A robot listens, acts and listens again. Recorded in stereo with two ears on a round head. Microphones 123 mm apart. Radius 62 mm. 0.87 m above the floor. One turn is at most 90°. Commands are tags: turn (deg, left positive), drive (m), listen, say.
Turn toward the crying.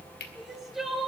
<turn deg="-30"/>
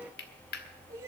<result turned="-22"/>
<listen/>
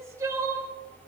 <turn deg="-90"/>
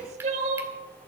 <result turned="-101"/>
<turn deg="-55"/>
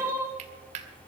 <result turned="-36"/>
<turn deg="-20"/>
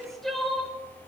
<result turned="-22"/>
<say>Found it: crying, straight ahead.</say>